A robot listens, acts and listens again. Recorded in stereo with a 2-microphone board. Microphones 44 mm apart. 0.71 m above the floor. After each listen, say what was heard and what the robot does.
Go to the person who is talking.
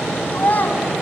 The child speaking: about 45° left or 135° left. Turn 45° left.
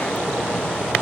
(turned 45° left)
Keep listening.
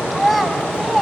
Drive 1.0 m forward.
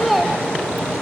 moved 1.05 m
Drive 1.0 m forward.
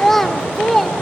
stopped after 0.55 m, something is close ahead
Arrived at the child speaking, straight ahead.